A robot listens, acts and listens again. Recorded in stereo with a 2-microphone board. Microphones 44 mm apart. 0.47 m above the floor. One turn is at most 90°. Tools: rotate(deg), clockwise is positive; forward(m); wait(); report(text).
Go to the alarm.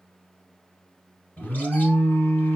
rotate(-50)
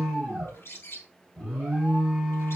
rotate(-10)
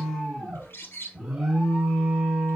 forward(1.0)
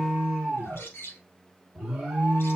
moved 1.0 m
forward(1.0)
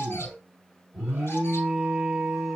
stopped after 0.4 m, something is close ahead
rotate(20)
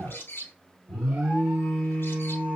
rotate(10)
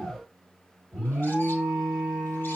report("I am next to the alarm.")